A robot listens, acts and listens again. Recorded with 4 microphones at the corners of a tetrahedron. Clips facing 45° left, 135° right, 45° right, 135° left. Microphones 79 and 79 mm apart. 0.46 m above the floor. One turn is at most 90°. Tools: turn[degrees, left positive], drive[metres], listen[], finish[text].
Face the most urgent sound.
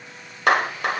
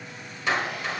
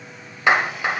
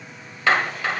Action: listen[]
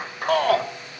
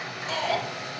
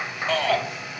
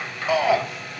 Thought: The shout: 60° left.
Action: turn[60]
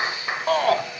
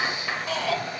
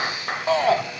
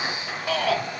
Thought: The shout is now 10° left.
Action: turn[10]
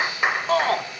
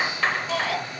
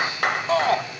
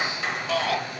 Action: finish[Found it: a shout, straight ahead.]